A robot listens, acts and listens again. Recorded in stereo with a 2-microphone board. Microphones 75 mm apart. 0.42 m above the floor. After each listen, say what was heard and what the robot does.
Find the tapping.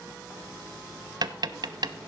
The tapping: about 60° right or 120° right. Turn 60° right.
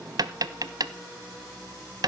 So it is at 60° right. Turn 60° right.
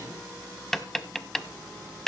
Facing the tapping.